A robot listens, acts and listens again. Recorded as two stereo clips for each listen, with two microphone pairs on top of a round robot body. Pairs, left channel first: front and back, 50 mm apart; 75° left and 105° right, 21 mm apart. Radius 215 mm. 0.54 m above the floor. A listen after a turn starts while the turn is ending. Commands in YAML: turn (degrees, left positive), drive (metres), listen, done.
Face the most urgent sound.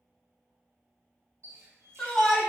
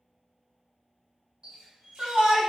turn: -75
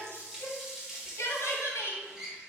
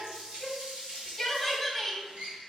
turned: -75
turn: -20
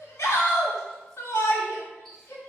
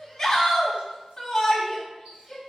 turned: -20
done: "Found it: a shout, straight ahead."